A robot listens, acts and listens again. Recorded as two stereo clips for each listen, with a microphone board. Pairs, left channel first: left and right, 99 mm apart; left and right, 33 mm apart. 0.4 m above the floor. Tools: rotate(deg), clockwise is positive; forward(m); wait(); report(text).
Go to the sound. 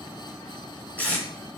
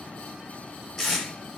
rotate(-30)
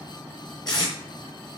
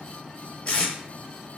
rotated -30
rotate(-135)
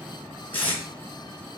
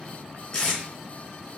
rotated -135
rotate(-20)
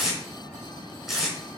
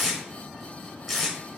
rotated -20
forward(1.0)
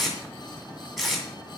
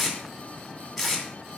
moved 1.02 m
forward(1.0)
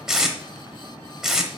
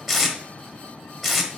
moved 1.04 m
forward(1.0)
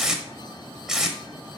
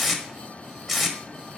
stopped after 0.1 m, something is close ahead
report("Arrived at the tape being pulled, straight ahead.")